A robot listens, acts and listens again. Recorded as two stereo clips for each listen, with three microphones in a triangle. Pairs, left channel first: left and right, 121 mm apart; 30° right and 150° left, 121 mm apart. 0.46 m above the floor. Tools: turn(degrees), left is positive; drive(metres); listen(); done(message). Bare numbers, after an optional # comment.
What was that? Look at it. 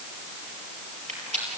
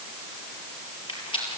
# The rattle: 75° right.
turn(-75)
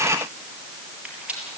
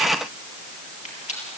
# The rattle is now 10° right.
turn(-10)
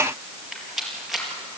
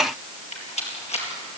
done("Found it: a rattle, straight ahead.")